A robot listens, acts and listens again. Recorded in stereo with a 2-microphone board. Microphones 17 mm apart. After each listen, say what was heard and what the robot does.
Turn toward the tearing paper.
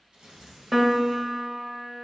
The tearing paper: about 65° right or 115° right. Turn 65° right.
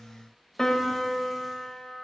Keep listening.
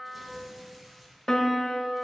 Facing the tearing paper, 1 to 2 m away.